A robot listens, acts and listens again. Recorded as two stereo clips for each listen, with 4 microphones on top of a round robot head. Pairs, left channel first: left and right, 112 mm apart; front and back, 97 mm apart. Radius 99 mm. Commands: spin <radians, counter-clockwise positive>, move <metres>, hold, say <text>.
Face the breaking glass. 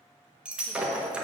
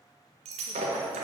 spin -2.97
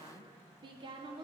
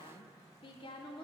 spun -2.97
say I heard breaking glass from this way, but can't make it out now.